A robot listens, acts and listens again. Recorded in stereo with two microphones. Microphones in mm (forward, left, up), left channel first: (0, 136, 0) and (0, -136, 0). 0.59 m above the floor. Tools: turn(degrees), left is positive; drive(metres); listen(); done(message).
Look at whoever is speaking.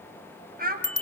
turn(degrees=-35)
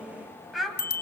done("Found it: a child speaking, straight ahead, 2 to 4 m away.")